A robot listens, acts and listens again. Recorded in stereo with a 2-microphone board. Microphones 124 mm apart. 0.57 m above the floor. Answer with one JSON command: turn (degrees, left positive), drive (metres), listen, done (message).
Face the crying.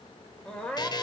{"turn": 30}
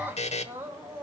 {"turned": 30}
{"turn": -20}
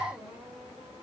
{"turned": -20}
{"turn": -10}
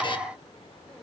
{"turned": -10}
{"listen": true}
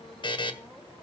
{"listen": true}
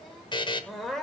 {"done": "Found it: crying, straight ahead, 2 to 4 m away."}